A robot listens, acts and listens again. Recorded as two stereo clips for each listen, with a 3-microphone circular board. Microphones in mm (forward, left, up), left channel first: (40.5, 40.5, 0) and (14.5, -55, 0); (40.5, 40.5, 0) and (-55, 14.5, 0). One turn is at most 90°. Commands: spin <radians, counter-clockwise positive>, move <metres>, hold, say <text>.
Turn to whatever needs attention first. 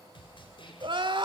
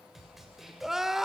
spin -1.40
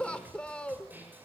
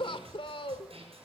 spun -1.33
say Found it: crying, straight ahead.